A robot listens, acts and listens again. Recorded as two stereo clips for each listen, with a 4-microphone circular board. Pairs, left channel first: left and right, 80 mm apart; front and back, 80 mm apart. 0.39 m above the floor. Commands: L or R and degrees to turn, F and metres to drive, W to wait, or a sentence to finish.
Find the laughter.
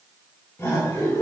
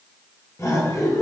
L45
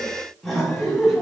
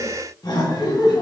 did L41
Facing the laughter, 2 to 4 m away.